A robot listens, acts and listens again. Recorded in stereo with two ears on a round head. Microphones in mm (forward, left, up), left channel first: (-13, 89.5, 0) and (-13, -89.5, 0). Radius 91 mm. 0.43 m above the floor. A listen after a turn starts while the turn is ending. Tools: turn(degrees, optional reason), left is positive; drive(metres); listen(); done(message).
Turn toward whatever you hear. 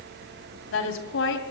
turn(degrees=65, reason="The woman speaking: about 65° left or 115° left.")
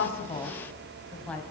done("Facing the woman speaking, 2 to 4 m away.")